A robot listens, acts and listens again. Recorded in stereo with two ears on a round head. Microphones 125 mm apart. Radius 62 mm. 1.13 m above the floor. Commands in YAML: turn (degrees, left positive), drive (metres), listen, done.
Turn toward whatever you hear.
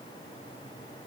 listen: true
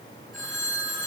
turn: 30
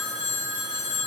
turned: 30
turn: 150
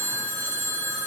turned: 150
done: "Facing the phone ringing."